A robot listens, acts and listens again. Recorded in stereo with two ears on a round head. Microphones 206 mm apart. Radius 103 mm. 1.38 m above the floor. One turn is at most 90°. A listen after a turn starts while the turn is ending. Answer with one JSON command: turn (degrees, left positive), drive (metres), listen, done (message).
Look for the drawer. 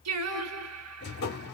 {"turn": 45}
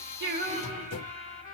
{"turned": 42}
{"turn": 90}
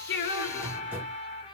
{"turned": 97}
{"turn": -10}
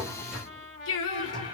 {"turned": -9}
{"done": "Facing the drawer."}